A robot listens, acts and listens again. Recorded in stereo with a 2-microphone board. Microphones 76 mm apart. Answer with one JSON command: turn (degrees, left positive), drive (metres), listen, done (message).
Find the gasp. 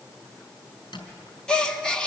{"turn": 30}
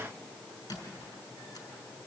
{"listen": true}
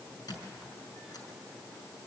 {"done": "I heard a gasp, but can't make it out now. It was about 20° right or 140° left."}